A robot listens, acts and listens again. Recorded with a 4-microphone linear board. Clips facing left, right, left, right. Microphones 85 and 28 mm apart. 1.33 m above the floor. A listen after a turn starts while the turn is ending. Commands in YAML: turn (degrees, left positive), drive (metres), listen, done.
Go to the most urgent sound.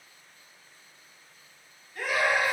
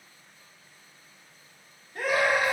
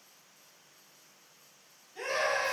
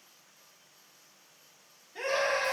turn: -50
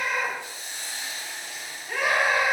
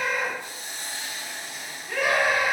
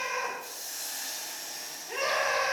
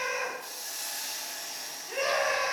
drive: 1.0
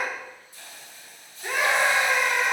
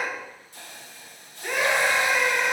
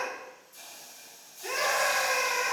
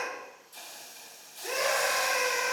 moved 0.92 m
drive: 1.0
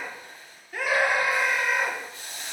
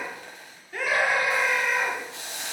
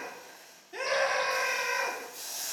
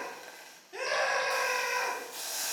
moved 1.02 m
drive: 1.0
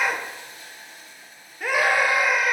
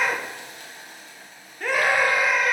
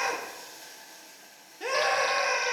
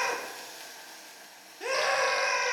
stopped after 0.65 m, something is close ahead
done: "I am next to the scream."